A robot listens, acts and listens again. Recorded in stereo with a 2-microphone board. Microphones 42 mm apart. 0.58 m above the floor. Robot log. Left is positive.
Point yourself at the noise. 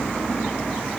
cmd idle
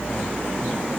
cmd idle
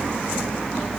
end: I can't make out anything.